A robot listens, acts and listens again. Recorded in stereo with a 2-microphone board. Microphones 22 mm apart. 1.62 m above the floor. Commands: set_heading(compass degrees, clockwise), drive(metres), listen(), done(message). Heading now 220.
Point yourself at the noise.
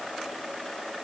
listen()
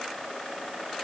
listen()
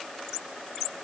done("I can't make out anything.")